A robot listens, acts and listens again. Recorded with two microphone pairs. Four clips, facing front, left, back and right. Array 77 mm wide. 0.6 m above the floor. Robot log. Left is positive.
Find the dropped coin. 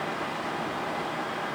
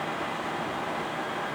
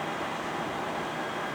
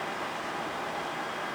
cmd idle
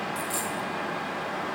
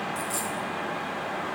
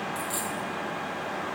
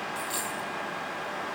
note: The dropped coin: 75° right.
cmd yaw -75
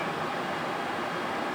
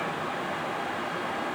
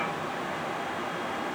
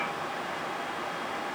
end: Facing where the dropped coin came from. I can't hear it now.